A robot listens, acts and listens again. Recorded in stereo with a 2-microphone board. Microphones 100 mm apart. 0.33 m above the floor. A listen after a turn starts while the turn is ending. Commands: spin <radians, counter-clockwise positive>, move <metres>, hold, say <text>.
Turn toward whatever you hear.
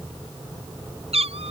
spin -1.57
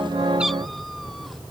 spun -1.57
hold
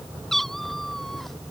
say Facing the cat meowing.